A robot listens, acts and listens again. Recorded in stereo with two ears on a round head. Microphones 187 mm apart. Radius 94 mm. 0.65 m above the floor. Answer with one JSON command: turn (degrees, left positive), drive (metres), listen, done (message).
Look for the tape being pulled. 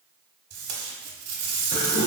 {"turn": -70}
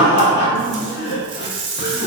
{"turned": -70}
{"turn": -25}
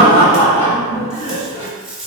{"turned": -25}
{"done": "Facing the tape being pulled, 1 to 2 m away."}